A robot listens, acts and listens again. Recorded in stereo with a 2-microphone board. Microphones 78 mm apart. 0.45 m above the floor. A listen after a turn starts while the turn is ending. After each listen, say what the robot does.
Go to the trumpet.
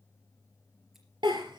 Keep listening.
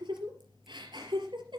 Keep listening.
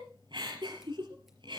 I can't make out a trumpet, only a giggle.